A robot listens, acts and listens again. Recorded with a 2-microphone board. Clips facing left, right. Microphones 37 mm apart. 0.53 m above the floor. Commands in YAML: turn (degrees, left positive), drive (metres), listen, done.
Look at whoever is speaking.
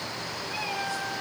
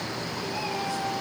listen: true
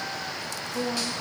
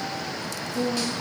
turn: 65
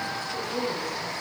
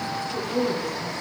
done: "Found it: a woman speaking, straight ahead."